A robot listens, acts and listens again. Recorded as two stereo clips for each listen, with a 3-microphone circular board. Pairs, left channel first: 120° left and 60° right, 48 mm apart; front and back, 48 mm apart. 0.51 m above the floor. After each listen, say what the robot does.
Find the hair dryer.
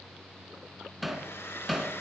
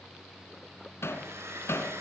Turn 155° left.
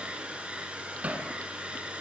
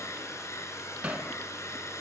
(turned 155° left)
Turn 10° left.
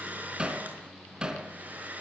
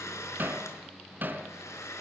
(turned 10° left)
Found it: a hair dryer, straight ahead.